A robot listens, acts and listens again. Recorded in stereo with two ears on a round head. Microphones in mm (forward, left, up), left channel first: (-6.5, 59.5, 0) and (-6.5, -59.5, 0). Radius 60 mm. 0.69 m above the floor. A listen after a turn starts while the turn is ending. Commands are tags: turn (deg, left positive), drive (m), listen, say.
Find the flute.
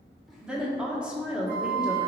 <turn deg="-75"/>
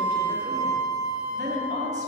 <say>Facing the flute.</say>